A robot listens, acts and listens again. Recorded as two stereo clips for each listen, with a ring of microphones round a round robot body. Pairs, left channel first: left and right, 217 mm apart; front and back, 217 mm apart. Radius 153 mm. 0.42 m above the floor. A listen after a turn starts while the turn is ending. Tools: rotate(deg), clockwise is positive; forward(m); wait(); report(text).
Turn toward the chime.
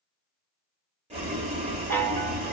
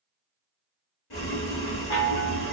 rotate(-10)
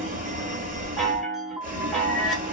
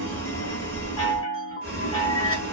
report("Facing the chime.")